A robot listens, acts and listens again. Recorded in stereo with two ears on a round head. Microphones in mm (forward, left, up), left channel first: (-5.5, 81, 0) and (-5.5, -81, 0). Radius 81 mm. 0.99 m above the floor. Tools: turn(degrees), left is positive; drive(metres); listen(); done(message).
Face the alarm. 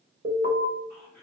turn(degrees=-55)
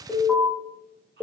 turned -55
turn(degrees=-10)
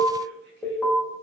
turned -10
done("Found it: an alarm, straight ahead.")